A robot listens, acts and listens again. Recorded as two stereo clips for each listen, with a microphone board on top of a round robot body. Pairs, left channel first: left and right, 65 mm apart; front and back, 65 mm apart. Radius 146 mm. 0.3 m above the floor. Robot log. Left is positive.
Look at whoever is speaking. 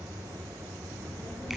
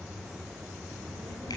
note: The child speaking: 45° left.
cmd yaw +45
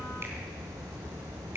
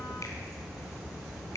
note: The child speaking is now 10° left.
cmd yaw +10
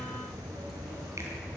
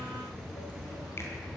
cmd idle
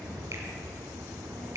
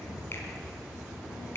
cmd idle
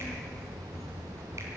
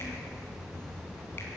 end: Found it: a child speaking, straight ahead.